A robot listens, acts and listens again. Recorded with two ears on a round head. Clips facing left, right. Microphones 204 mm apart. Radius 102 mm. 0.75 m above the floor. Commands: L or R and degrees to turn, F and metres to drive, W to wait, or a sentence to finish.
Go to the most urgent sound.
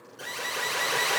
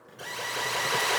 L30
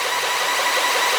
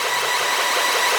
R25
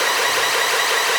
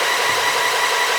L15
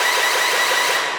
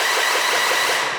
F1.0
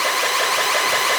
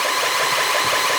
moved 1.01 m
F1.0
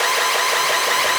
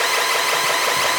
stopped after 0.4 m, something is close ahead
R10
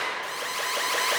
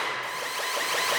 I am next to the alarm.